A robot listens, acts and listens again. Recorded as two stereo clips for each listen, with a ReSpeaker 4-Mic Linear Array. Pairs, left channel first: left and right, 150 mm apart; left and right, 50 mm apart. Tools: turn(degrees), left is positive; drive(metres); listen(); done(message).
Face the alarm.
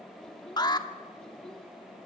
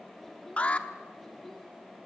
turn(degrees=30)
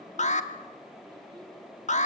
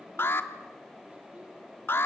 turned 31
turn(degrees=115)
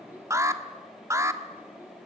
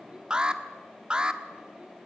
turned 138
turn(degrees=-25)
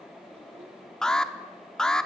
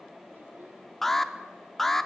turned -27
done("Facing the alarm.")